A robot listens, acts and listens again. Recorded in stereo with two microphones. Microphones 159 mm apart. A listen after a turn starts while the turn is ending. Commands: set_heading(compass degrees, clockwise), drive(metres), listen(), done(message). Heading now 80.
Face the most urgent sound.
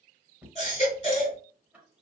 set_heading(35)
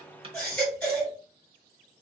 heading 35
set_heading(25)
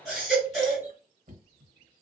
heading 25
done("Found it: a baby crying, straight ahead.")